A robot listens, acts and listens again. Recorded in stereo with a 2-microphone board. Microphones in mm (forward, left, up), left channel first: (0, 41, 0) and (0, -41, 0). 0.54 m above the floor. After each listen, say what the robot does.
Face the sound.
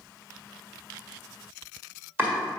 Turn 25° right.
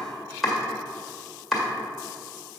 Found it: chopping, straight ahead.